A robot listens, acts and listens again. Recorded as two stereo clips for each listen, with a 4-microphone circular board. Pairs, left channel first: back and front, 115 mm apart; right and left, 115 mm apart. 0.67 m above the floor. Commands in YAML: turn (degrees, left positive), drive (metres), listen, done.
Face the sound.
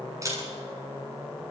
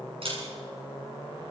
turn: 60
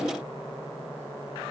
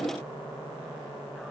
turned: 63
listen: true
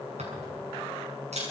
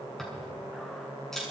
done: "Found it: a camera shutter, straight ahead."